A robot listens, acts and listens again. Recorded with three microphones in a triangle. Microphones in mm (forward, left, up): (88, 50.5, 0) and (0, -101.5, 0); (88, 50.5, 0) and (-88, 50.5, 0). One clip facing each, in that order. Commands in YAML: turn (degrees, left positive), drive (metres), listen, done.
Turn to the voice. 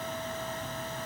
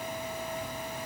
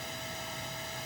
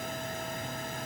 listen: true
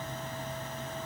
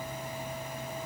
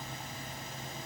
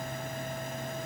listen: true
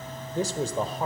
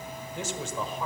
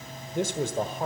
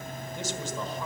turn: 15
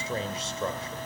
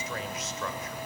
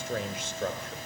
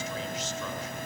done: "Facing the man speaking."